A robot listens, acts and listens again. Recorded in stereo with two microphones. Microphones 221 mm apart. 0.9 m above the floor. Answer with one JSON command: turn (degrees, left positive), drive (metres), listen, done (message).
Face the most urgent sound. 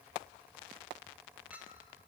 {"listen": true}
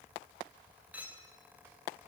{"listen": true}
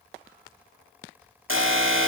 {"turn": -70}
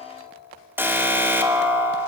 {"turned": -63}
{"turn": -10}
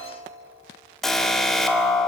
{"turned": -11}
{"done": "Found it: an alarm, straight ahead, 1 to 2 m away."}